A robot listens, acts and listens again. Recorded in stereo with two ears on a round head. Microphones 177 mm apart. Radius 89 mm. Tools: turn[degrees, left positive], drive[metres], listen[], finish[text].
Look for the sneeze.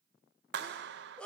Action: turn[30]
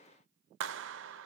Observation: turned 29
Action: listen[]
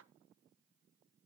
Action: finish[I heard a sneeze, but can't make it out now. It was about 25° right or 145° left.]